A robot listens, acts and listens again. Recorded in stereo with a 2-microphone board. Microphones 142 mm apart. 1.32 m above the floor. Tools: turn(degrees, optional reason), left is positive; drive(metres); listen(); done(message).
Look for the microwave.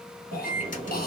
turn(degrees=60, reason="The microwave: about 60° left or 120° left.")
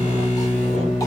turn(degrees=55, reason="So it is at 55° left.")
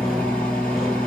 turn(degrees=10, reason="The microwave is now 10° left.")
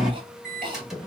done("Facing the microwave, 1 to 2 m away.")